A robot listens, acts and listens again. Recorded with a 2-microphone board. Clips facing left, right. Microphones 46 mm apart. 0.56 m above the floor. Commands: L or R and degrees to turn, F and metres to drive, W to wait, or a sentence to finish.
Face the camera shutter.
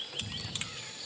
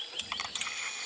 R60
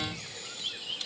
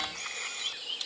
R55
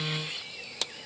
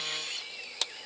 W
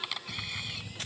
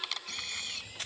L10
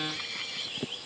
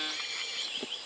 Found it: a camera shutter, straight ahead.